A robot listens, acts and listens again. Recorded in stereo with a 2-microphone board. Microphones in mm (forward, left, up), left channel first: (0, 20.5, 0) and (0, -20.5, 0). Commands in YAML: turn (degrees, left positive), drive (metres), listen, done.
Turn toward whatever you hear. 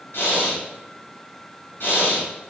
turn: 60
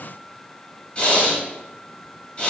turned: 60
turn: 35
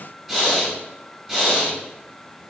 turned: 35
done: "Facing the breathing, 1 to 2 m away."